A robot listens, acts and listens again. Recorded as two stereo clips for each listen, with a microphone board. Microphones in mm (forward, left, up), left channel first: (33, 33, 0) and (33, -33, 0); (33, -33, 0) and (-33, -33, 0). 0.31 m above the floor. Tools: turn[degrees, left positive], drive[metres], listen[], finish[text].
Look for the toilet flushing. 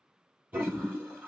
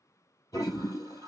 Thought: The toilet flushing: 25° right.
Action: turn[-25]
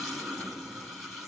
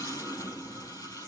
Action: finish[Found it: a toilet flushing, straight ahead, 2 to 4 m away.]